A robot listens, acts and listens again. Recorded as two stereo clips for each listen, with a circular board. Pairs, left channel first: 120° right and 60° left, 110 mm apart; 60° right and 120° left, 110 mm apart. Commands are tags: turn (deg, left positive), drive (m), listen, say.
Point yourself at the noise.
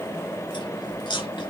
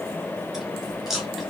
<turn deg="-155"/>
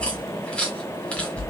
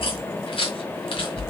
<turn deg="-40"/>
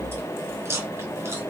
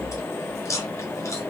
<say>Facing the chewing, 1 to 2 m away.</say>